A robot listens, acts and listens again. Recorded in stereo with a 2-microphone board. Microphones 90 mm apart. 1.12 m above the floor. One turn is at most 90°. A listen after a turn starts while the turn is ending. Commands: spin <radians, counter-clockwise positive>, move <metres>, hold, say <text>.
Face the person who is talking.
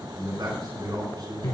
spin -0.87
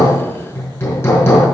hold
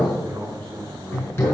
spin -1.31
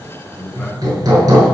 hold
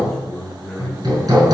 say Found it: a man speaking, straight ahead.